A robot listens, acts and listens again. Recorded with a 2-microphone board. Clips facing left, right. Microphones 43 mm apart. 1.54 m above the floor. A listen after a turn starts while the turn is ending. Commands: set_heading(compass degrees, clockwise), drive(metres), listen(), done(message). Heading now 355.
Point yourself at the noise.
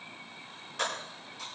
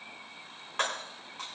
set_heading(35)
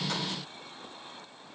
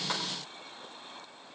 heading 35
listen()
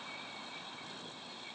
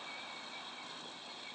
done("I heard breaking glass, but can't make it out now. It was about straight ahead or 100° right.")